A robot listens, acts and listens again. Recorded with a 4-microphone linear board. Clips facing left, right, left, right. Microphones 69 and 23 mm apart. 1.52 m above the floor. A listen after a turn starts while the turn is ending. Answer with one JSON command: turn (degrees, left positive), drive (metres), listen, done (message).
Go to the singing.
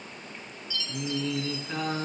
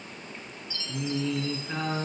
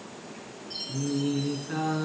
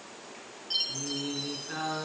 {"turn": -30}
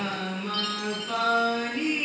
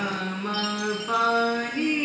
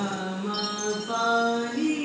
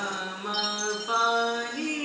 {"turn": -140}
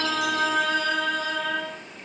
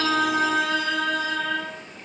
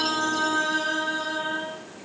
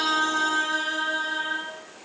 {"drive": 1.0}
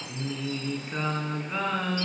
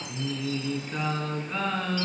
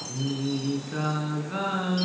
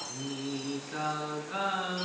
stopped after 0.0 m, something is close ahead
{"turn": 10}
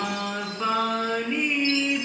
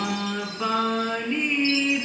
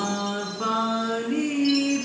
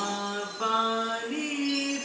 {"done": "Blocked. The singing is further on, straight ahead."}